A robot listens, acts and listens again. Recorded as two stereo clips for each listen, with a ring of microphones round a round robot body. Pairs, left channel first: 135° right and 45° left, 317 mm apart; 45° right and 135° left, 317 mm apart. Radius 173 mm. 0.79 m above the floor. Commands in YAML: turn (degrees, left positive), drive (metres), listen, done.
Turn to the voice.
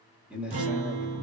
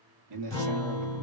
turn: 130
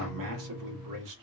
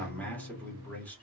turn: 40
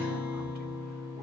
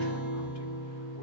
listen: true
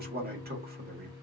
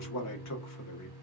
turn: -15
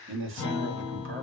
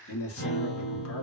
done: "Facing the man speaking."